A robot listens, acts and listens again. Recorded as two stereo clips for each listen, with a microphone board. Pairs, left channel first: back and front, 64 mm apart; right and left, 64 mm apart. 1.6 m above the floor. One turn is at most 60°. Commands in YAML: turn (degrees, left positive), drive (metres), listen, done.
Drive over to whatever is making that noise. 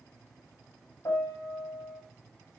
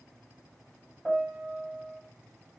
turn: -60
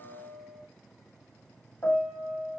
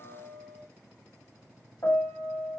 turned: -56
turn: -60
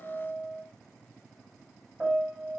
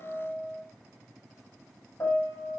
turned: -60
turn: -55
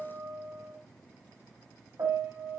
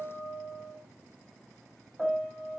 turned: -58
drive: 1.0
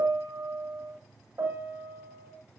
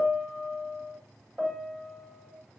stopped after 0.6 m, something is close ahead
turn: 10
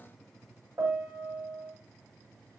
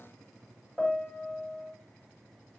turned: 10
done: "Blocked. The piano is further on, straight ahead."